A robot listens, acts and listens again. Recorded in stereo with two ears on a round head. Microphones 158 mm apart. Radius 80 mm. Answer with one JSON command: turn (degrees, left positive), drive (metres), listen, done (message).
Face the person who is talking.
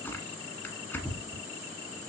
{"listen": true}
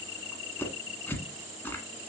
{"listen": true}
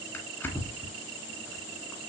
{"done": "I can't make out anyone speaking, only tearing paper."}